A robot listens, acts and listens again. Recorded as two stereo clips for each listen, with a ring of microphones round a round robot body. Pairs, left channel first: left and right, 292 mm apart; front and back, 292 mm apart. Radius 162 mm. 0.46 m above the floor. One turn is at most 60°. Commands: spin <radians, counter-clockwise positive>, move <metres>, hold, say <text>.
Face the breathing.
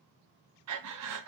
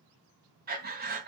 spin -1.05
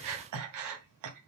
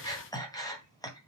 spin -1.05
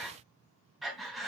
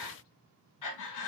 say Found it: breathing, straight ahead, 2 to 4 m away.